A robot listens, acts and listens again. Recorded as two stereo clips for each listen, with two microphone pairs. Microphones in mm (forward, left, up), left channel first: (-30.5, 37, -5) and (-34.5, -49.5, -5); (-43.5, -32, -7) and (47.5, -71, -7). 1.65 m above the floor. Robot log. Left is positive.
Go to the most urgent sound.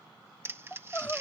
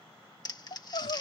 note: The crying: 160° left.
cmd yaw +160
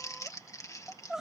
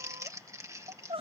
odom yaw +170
note: The crying is now 10° right.
cmd yaw -10
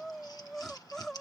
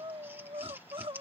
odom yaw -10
cmd fwd 1.0
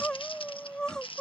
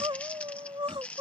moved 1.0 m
cmd fwd 1.0
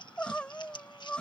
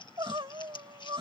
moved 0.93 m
note: The crying is now 10° left.
cmd yaw +10
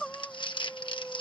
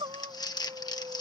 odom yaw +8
cmd fwd 1.0
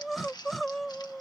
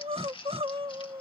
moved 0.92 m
cmd fwd 1.0
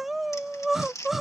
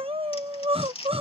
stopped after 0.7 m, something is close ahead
end: Arrived at the crying, straight ahead.